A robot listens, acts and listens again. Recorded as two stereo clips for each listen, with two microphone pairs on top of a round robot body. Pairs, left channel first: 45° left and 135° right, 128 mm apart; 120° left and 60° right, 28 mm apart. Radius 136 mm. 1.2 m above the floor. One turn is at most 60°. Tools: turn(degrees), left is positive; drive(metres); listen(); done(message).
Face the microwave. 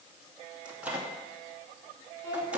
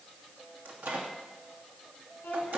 turn(degrees=-55)
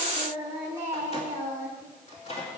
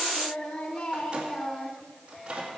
done("Facing the microwave, 2 to 4 m away.")